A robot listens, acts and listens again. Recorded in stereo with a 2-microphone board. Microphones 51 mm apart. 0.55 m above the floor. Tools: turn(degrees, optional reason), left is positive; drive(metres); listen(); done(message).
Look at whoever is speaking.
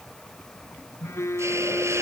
listen()
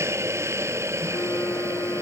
listen()
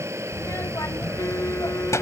turn(degrees=90)
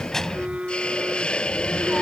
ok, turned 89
turn(degrees=10, reason="So it is at 10° left.")
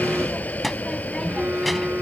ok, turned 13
done("Facing the child speaking.")